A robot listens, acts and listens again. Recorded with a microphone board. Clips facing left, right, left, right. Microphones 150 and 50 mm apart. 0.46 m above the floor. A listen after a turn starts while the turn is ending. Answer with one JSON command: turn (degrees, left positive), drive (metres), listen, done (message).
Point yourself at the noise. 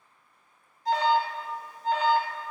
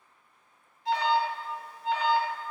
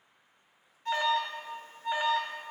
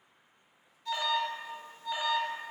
{"turn": 40}
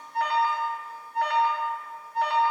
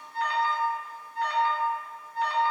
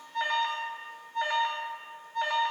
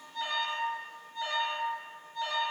{"turn": 95}
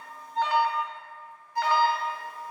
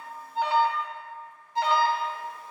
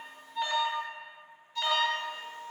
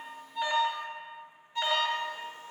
{"turn": -25}
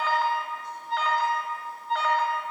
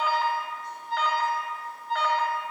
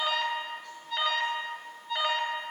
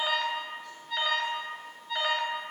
{"done": "Facing the alarm, under 1 m away."}